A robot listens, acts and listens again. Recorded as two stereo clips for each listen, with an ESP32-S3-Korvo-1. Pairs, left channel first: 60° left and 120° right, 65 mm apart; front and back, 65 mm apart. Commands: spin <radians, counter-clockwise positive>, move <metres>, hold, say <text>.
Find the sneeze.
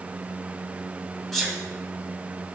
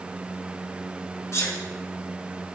spin -0.44
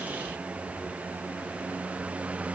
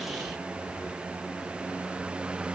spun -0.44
say I heard a sneeze from this way, but can't make it out now.